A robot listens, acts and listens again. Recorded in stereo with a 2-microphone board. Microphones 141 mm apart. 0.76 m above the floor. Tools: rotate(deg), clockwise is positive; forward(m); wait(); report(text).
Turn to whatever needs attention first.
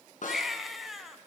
rotate(-30)
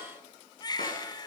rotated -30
rotate(-150)
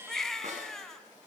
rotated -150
report("Facing the baby crying, 2 to 4 m away.")